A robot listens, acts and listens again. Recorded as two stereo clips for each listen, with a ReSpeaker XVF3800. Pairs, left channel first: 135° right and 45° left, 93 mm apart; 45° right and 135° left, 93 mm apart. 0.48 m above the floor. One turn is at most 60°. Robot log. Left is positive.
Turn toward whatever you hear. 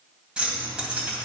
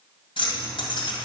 note: The keys jangling: 35° right.
cmd yaw -35
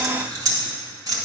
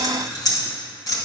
end: Found it: keys jangling, straight ahead, 1 to 2 m away.